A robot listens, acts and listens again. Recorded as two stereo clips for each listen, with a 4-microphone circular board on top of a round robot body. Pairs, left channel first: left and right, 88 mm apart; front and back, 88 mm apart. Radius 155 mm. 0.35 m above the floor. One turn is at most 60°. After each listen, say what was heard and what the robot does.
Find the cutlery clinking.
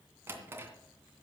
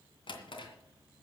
Keep listening.
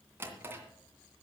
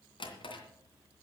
Keep listening.
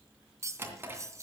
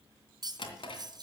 The cutlery clinking: 145° right. Turn 60° right.
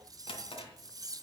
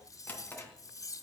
The cutlery clinking is now 45° right. Turn 45° right.
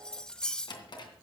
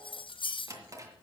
The cutlery clinking is now 10° left. Turn 10° left.
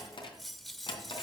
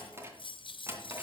Facing the cutlery clinking.